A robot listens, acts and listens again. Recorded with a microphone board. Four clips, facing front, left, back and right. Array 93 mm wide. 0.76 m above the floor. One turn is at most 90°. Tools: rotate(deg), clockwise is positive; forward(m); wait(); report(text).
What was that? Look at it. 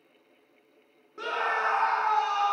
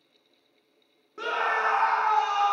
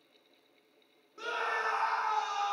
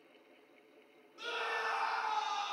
rotate(-65)
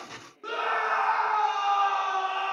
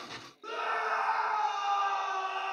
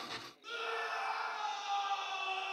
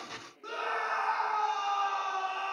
report("Found it: a scream, straight ahead.")